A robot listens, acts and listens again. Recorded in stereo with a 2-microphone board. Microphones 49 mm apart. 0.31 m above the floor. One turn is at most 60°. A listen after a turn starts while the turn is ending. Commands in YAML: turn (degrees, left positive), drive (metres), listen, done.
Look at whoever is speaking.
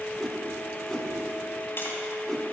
listen: true
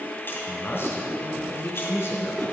turn: 55
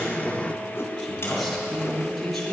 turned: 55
done: "Found it: a man speaking, straight ahead."